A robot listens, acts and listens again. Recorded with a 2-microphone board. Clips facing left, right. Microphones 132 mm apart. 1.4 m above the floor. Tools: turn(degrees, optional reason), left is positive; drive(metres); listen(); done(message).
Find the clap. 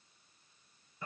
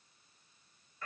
listen()
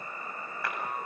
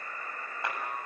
turn(degrees=-20, reason="The clap: about 20° right or 160° right.")
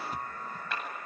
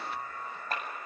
turn(degrees=-140, reason="So it is at 140° right.")
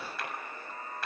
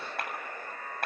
turn(degrees=-55, reason="The clap is now 55° right.")
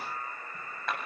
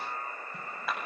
done("Found it: a clap, straight ahead, over 4 m away.")